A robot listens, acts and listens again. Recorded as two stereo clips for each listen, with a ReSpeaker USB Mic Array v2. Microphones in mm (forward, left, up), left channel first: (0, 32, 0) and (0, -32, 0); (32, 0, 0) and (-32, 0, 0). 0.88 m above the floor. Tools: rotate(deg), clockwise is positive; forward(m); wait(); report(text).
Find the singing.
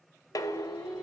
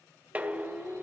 rotate(-10)
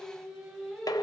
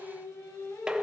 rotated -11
report("Found it: singing, straight ahead.")